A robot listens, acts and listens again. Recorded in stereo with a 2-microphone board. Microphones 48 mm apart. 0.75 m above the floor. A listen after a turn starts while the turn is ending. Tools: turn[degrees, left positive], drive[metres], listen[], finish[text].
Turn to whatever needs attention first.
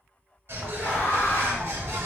Thought: The scream: about 50° left or 130° left.
Action: turn[50]
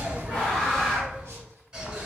Thought: So it is at 15° left.
Action: turn[15]
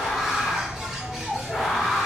Action: finish[Found it: a scream, straight ahead, 1 to 2 m away.]